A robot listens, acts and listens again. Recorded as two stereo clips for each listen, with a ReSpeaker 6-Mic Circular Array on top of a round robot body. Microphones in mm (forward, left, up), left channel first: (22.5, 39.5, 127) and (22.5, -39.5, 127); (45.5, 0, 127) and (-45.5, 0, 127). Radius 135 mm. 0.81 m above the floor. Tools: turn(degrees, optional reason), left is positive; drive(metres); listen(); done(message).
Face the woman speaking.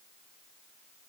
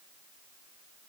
listen()
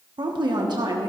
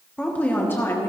turn(degrees=-60, reason="The woman speaking: 60° right.")
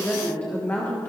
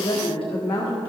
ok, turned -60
turn(degrees=30, reason="The woman speaking is now 30° left.")
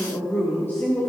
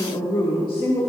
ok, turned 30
turn(degrees=30, reason="The woman speaking is now 30° left.")
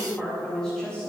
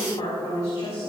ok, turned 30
turn(degrees=15, reason="The woman speaking is now 15° left.")
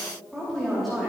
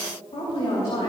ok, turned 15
done("Facing the woman speaking.")